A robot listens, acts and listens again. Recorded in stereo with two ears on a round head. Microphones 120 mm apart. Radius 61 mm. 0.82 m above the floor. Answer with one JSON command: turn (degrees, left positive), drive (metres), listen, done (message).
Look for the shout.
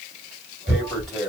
{"listen": true}
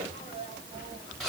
{"turn": 30}
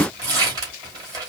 {"listen": true}
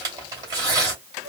{"listen": true}
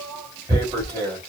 {"done": "Facing the shout."}